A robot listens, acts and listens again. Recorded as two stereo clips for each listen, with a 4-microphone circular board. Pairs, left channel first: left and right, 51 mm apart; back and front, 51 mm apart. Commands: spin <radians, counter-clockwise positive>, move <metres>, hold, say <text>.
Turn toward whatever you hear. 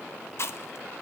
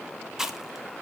spin 1.40
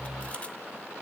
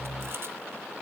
hold
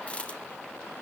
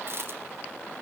spin 0.44
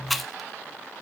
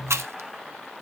say Found it: chewing, straight ahead.